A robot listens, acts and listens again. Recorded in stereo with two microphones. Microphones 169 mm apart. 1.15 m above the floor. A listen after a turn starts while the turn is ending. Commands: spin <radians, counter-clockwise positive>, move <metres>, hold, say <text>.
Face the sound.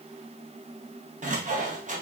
spin -0.87
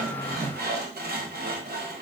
spin -1.40
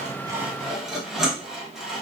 say Found it: sawing, straight ahead.